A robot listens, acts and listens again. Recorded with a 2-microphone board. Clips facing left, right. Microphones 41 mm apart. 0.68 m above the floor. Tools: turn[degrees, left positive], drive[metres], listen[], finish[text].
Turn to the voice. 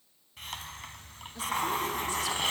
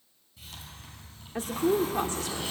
Thought: The woman speaking: about 55° right or 125° right.
Action: turn[-55]
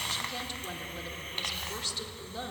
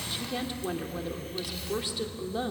Thought: So it is at 15° right.
Action: turn[-15]
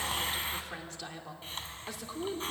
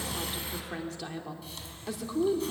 Action: finish[Found it: a woman speaking, straight ahead, 2 to 4 m away.]